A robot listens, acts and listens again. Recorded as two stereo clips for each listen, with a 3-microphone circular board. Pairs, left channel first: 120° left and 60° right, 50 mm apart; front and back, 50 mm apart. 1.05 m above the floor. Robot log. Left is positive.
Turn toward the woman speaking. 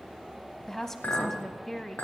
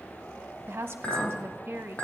note: The woman speaking: 160° right.
cmd yaw -160
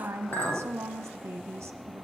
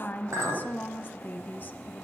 note: The woman speaking is now 45° right.
cmd yaw -45
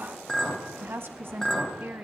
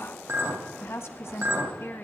note: The woman speaking is now 20° right.
cmd yaw -20
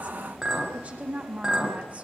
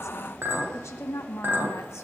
end: Facing the woman speaking, 1 to 2 m away.